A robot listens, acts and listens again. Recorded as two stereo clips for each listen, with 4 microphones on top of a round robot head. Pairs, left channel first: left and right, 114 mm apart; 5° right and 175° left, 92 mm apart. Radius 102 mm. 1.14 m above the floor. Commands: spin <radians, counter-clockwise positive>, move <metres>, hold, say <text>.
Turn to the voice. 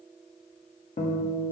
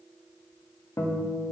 hold
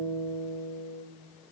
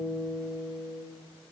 hold
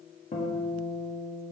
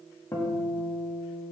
say I can't make out anyone speaking to turn to.